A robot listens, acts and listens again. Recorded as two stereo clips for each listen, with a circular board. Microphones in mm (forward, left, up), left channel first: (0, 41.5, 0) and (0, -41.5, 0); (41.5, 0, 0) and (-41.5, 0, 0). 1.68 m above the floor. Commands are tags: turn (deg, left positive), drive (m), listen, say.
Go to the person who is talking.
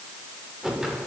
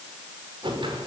<listen/>
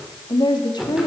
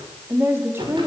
<turn deg="115"/>
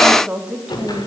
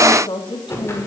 <turn deg="-15"/>
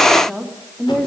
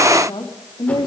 <drive m="1.0"/>
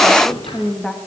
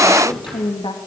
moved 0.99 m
<drive m="1.0"/>
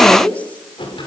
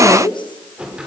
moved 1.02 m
<turn deg="15"/>
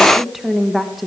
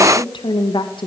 <drive m="1.0"/>
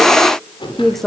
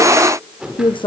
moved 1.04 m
<drive m="1.0"/>
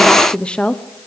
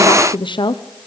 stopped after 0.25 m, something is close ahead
<turn deg="10"/>
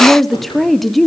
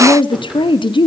<say>Arrived at the woman speaking, straight ahead.</say>